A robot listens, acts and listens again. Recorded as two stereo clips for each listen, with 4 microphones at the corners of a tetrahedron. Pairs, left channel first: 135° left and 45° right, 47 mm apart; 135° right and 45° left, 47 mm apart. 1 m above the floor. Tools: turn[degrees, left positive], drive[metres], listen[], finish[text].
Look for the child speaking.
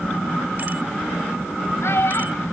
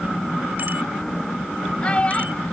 Thought: The child speaking: 165° left.
Action: turn[165]
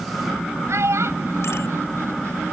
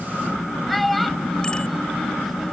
Thought: The child speaking is now 45° right.
Action: turn[-45]
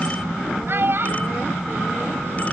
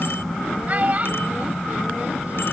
Thought: The child speaking is now 10° right.
Action: turn[-10]
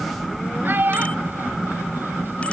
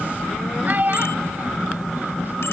Action: finish[Facing the child speaking.]